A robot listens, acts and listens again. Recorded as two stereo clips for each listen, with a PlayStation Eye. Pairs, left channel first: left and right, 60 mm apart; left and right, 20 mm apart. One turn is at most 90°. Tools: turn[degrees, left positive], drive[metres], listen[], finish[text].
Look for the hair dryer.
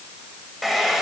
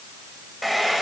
Action: turn[30]
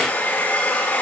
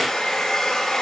Thought: So it is at 150° left.
Action: turn[90]
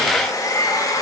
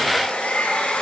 Thought: The hair dryer is now 80° left.
Action: turn[80]
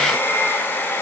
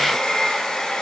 Thought: The hair dryer is now 35° left.
Action: turn[35]
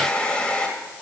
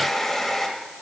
Thought: The hair dryer is now 15° left.
Action: turn[15]
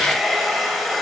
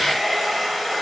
Action: finish[Found it: a hair dryer, straight ahead.]